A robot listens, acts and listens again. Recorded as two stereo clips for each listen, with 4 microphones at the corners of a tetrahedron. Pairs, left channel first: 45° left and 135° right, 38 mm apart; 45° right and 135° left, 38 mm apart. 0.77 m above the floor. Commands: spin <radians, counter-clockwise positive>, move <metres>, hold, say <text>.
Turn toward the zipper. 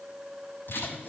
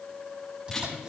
spin 1.22
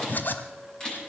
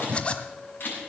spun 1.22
spin 0.26
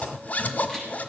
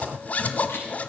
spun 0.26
say Facing the zipper.